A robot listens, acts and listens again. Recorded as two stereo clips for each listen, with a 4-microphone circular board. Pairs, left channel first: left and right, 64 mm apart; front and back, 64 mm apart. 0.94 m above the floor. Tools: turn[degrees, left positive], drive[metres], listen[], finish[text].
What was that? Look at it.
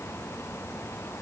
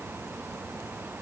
Action: listen[]
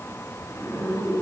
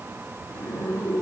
Thought: The zipper: 55° left.
Action: turn[55]
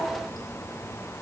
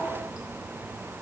Action: listen[]
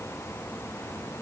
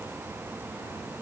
Action: listen[]
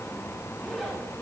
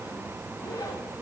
Action: finish[Facing the zipper, 1 to 2 m away.]